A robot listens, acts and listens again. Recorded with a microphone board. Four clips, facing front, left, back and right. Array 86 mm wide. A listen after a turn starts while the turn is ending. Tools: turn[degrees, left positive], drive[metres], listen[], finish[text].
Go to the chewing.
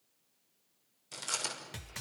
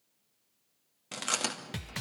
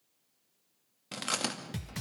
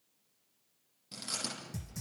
Thought: The chewing: 130° left.
Action: turn[130]
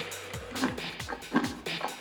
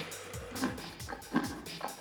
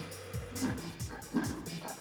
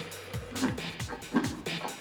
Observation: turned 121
Thought: The chewing is now 10° left.
Action: turn[10]
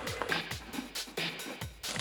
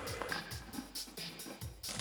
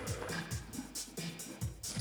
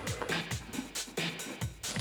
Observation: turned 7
Action: listen[]
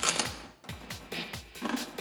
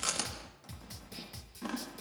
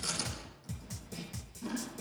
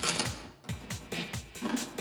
Action: drive[1.0]
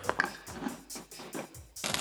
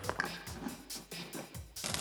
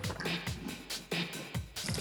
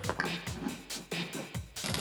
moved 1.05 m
Action: drive[1.0]
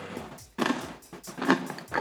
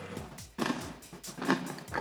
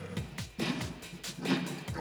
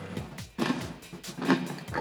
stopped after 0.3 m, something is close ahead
Action: finish[I am next to the chewing.]